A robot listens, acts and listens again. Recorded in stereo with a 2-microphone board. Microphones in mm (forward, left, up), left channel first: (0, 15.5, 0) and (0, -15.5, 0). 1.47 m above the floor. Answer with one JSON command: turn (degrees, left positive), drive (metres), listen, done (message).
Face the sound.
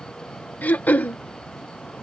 {"turn": 70}
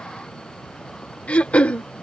{"turn": 40}
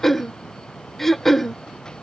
{"done": "Facing the throat clearing."}